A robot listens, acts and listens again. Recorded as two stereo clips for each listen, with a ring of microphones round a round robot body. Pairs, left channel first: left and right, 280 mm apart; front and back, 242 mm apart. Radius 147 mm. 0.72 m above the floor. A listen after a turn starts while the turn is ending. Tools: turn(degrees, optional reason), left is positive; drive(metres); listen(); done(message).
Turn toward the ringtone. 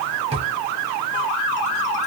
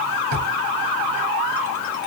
listen()
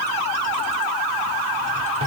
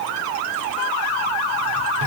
listen()
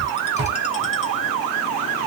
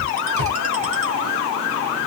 done("I can't make out a ringtone to turn to.")